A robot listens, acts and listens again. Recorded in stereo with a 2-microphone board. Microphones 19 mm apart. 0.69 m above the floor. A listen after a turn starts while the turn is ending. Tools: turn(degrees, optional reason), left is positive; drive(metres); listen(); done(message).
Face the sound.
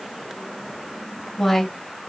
turn(degrees=25, reason="The woman speaking: about 25° left or 155° left.")
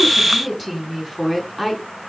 turn(degrees=30)
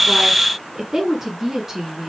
turn(degrees=-10, reason="So it is at 10° right.")
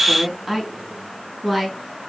done("Found it: a woman speaking, straight ahead, over 4 m away.")